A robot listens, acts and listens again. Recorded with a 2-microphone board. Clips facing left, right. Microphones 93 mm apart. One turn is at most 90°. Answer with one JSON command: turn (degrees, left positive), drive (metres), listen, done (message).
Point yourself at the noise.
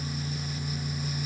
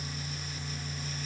{"listen": true}
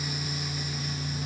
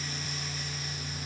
{"listen": true}
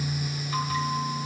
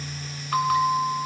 {"turn": -70}
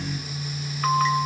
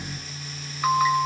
{"done": "Facing the bell."}